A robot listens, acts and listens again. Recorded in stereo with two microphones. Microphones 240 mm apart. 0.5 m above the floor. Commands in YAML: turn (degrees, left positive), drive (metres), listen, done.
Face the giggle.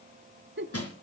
turn: -50
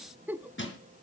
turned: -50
turn: -10
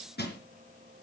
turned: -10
listen: true
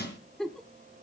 done: "Facing the giggle, under 1 m away."